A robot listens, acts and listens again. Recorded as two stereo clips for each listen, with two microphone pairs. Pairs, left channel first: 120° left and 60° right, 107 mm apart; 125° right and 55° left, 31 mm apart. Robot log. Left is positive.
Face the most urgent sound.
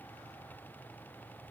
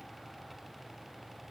cmd idle
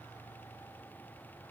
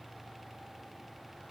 cmd idle
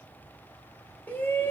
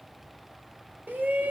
note: The shout: 50° left.
cmd yaw +50
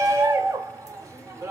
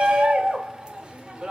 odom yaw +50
end: Facing the shout, 1 to 2 m away.